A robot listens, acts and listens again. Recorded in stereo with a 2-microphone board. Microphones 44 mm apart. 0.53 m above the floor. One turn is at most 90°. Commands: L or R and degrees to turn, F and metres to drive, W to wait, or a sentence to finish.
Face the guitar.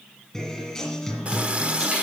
L30
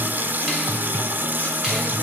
L90
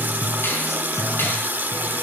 L85
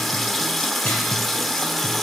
W
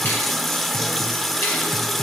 W
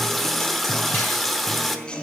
L25
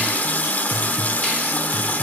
W
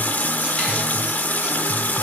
W
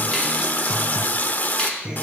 R20
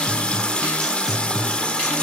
Facing the guitar.